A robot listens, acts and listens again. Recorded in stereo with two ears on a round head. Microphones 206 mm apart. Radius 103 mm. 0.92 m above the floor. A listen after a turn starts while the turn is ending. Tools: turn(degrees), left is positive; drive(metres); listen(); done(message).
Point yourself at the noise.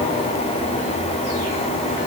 listen()
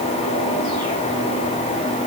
listen()
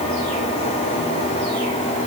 done("I can't make out anything to turn to.")